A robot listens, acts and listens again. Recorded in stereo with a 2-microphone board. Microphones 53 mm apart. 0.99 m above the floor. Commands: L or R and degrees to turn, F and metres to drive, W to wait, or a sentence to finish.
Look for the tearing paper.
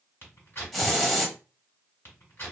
L45
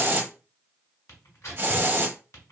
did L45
L80
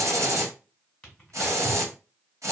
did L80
W
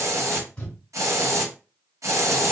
L25
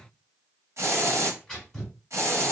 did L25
L10
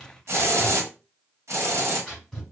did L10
Facing the tearing paper.